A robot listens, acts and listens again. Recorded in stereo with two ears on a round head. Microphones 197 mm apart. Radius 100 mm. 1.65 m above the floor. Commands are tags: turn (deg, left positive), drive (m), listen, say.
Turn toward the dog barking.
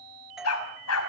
<turn deg="90"/>
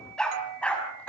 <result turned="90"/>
<say>Facing the dog barking, over 4 m away.</say>